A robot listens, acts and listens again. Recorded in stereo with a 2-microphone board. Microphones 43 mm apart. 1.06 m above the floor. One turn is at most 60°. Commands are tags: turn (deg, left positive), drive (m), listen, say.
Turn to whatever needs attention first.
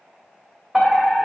<turn deg="-30"/>
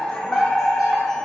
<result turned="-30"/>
<turn deg="25"/>
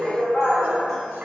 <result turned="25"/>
<turn deg="15"/>
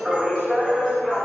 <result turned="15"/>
<say>Facing the fire alarm, 2 to 4 m away.</say>